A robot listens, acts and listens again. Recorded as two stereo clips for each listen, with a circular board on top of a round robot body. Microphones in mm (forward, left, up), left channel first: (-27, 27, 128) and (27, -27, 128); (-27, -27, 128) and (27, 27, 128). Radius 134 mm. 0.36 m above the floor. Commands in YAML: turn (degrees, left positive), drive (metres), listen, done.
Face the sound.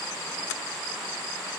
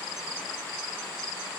listen: true
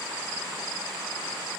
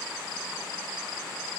listen: true
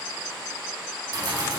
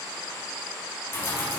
turn: -75
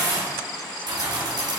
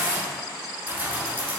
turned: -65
turn: -20
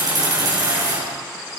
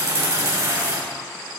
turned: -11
done: "Found it: keys jangling, straight ahead, over 4 m away."